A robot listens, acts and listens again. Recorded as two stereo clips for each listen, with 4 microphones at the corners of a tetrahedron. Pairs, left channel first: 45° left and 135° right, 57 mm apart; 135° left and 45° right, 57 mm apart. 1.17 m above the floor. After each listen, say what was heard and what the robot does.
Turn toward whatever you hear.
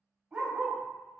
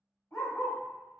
The dog barking: 170° left. Turn 170° left.
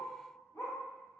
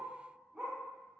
The dog barking is now 30° left. Turn 30° left.
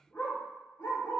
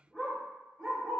The dog barking is now 45° left. Turn 45° left.
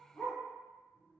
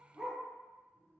The dog barking is now 25° left. Turn 25° left.
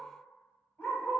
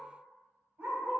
Found it: a dog barking, straight ahead.